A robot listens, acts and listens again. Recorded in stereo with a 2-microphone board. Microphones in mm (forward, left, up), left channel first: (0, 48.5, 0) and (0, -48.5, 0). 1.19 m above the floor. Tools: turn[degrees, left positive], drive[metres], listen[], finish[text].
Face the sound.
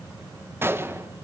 Thought: The gunshot: about 25° right or 155° right.
Action: turn[-25]
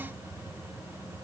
Action: listen[]
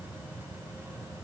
Action: finish[I heard a gunshot, but can't make it out now. It was about straight ahead or 130° right.]